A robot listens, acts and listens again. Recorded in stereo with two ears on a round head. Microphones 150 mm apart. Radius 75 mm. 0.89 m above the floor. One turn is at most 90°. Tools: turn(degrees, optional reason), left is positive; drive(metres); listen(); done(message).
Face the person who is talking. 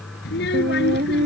turn(degrees=65, reason="The child speaking: about 65° left or 115° left.")
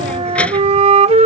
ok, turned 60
listen()
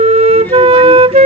listen()
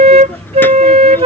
turn(degrees=10, reason="So it is at 10° left.")
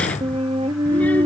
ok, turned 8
listen()
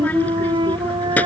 turn(degrees=10, reason="The child speaking is now 10° left.")
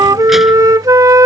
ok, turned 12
listen()
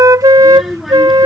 done("Found it: a child speaking, straight ahead.")